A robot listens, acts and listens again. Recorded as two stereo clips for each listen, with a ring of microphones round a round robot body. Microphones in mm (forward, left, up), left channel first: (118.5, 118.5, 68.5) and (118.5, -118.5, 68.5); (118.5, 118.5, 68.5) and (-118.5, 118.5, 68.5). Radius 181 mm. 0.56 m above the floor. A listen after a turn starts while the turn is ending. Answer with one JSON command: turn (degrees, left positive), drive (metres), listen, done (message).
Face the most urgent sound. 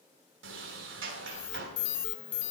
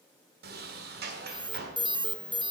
{"turn": 110}
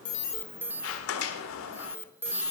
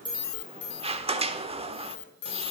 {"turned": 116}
{"turn": -10}
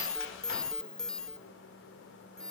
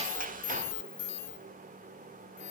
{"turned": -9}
{"done": "Facing the alarm, under 1 m away."}